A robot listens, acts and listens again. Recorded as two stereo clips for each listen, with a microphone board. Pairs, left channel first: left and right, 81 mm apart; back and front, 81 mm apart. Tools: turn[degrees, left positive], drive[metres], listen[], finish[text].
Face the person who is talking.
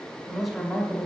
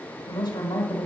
Thought: The man speaking: straight behind.
Action: turn[180]
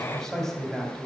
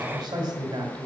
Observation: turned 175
Action: finish[Facing the man speaking.]